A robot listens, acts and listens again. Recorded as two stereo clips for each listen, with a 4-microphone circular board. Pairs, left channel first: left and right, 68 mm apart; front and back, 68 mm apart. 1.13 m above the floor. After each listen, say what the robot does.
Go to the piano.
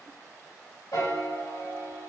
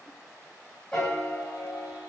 Turn 80° left.
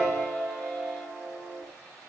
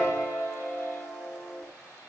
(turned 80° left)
Drive 1.0 m forward.
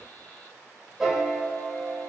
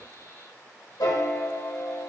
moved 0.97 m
Drive 1.0 m forward.
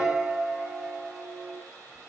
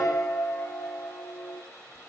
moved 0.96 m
Turn 10° right.
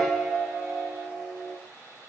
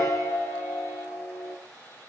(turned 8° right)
Drive 1.0 m forward.
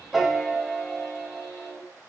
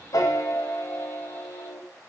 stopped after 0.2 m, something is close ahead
I am next to the piano.